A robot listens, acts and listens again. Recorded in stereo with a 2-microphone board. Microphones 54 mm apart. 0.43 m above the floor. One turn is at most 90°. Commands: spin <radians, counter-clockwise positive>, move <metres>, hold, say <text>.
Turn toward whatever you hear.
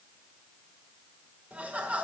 spin -0.35
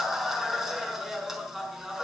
say Facing the laughter, over 4 m away.